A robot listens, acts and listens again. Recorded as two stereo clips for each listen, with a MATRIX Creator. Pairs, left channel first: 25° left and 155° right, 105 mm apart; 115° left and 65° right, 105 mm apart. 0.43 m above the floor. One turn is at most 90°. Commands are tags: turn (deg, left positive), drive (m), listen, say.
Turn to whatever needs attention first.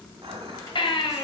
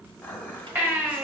<say>Found it: a baby crying, straight ahead, 1 to 2 m away.</say>